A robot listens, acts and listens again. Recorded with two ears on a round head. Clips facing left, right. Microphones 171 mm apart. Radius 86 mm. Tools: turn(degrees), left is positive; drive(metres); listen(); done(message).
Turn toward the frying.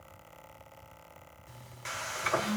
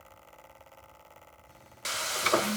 turn(degrees=-45)
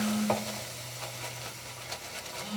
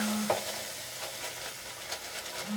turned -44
done("Found it: frying, straight ahead.")